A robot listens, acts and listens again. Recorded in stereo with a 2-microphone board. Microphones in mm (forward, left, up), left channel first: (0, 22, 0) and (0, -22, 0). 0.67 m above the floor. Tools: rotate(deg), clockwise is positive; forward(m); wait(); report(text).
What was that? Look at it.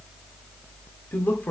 rotate(-40)
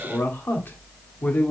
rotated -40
rotate(-45)
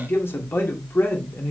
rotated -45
rotate(-130)
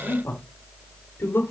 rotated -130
rotate(-60)
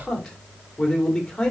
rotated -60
rotate(-10)
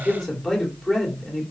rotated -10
report("Found it: a man speaking, straight ahead, 2 to 4 m away.")